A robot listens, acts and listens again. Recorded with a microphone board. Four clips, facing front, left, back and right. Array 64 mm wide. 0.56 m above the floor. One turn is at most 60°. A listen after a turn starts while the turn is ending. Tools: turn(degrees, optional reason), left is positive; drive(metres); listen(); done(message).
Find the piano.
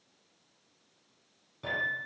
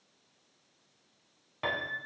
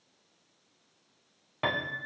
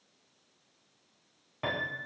turn(degrees=60, reason="The piano: 175° left.")
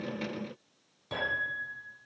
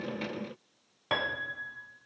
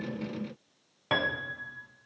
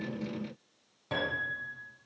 turn(degrees=60, reason="The piano is now 140° left.")
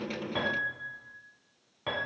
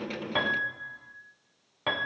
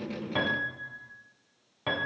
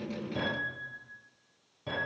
turn(degrees=60, reason="The piano is now 95° left.")
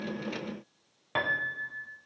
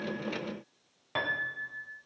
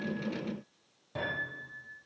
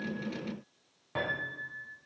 turn(degrees=20, reason="The piano is now 20° left.")
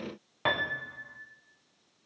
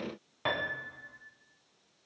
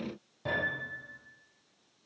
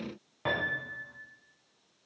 turn(degrees=10, reason="The piano is now 10° left.")
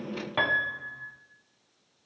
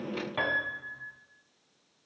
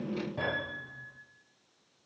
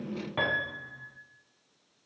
done("Facing the piano.")